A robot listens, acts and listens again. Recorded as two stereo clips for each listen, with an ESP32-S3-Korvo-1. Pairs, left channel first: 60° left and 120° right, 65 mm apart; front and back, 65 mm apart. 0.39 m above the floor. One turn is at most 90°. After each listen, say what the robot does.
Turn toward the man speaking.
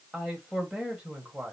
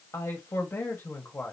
Turn 50° right.
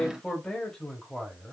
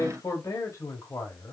Turn 30° right.
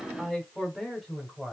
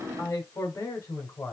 Turn 40° right.
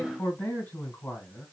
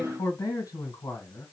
Facing the man speaking.